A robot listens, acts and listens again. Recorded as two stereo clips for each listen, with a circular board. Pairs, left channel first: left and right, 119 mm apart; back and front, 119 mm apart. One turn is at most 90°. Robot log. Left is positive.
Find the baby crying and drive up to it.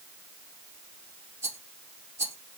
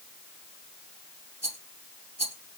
cmd idle
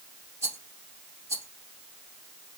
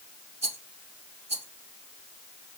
cmd idle
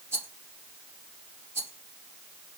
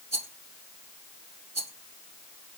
end: I can't make out a baby crying, only a rattle.